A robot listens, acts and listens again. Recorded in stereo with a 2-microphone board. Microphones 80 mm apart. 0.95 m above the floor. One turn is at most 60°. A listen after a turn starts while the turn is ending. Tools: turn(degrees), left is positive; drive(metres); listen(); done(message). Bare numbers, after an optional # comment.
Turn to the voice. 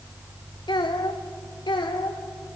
turn(60)
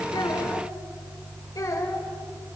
# So it is at 45° left.
turn(45)
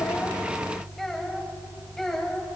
done("Found it: a child speaking, straight ahead, over 4 m away.")